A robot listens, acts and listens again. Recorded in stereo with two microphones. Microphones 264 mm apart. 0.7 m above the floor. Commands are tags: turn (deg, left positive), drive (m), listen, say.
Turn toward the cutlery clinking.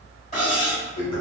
<turn deg="25"/>
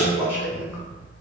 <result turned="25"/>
<listen/>
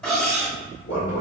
<say>Found it: cutlery clinking, straight ahead, 1 to 2 m away.</say>